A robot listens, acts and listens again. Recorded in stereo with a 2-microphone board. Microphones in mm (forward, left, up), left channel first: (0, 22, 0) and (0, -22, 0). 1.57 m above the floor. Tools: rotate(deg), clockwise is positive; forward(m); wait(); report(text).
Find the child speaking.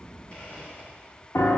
wait()
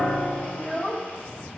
rotate(-25)
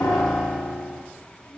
rotate(-105)
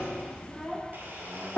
rotate(-15)
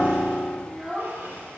report("Found it: a child speaking, straight ahead.")